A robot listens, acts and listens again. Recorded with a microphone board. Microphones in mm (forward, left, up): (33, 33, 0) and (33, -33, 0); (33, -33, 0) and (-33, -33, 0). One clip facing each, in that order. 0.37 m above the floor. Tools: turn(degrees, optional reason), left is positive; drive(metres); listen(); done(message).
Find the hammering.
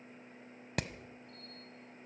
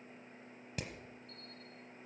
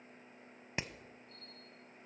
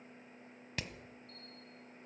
turn(degrees=65, reason="The hammering: 65° left.")
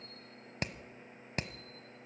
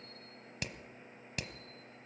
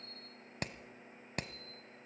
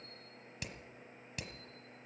turn(degrees=35, reason="The hammering is now 35° left.")
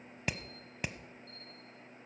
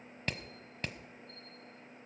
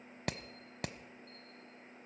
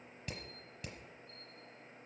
turn(degrees=10, reason="The hammering is now 10° left.")
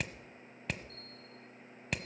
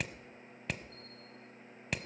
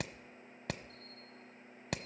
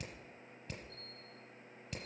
done("Facing the hammering.")